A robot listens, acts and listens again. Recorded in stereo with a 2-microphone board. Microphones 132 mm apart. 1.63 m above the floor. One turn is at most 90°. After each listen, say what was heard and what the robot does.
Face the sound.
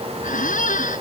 Turn 90° left.
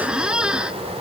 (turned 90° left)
Facing the squeak.